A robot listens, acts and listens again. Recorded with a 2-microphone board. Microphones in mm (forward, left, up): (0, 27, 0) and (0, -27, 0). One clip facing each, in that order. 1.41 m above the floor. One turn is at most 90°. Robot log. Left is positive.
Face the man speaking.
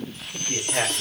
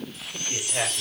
cmd yaw +30
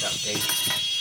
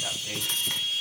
cmd idle
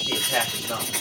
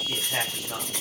note: So it is at 140° left.
cmd yaw +90
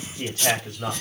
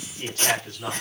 note: The man speaking is now 30° left.
cmd yaw +30
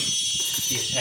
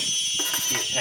end: Found it: a man speaking, straight ahead, over 4 m away.